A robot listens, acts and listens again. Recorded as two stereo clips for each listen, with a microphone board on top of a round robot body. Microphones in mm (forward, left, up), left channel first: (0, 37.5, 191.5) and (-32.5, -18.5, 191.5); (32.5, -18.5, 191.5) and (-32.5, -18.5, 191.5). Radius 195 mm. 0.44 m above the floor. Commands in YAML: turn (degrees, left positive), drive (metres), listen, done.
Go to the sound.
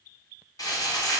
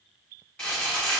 turn: 75
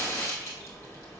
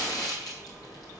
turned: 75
turn: 15
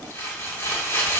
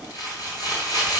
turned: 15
turn: 10
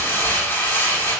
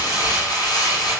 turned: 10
drive: 1.0
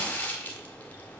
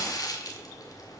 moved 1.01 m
drive: 1.0
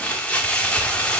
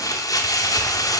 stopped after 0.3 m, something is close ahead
turn: -10
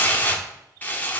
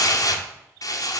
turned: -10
done: "I am next to the crumpling."